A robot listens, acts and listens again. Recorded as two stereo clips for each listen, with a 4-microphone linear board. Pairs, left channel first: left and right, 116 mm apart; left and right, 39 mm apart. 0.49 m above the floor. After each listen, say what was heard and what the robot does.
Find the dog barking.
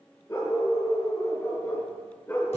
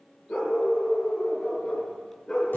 The dog barking: about 20° left or 160° left. Turn 20° left.
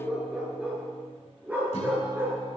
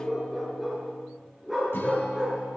So it is at 20° right. Turn 20° right.
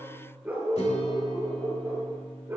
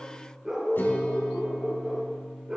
The dog barking is now 20° right. Turn 20° right.
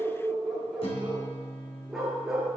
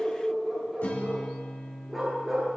Found it: a dog barking, straight ahead.